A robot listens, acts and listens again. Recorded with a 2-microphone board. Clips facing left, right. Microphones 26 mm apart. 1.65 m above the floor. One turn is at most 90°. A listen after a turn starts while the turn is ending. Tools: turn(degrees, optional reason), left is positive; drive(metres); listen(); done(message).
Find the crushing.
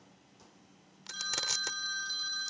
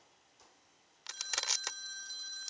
turn(degrees=-30)
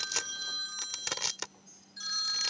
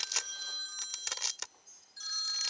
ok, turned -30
turn(degrees=15, reason="So it is at 15° left.")
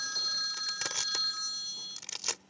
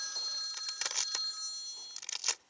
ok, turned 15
done("Facing the crushing.")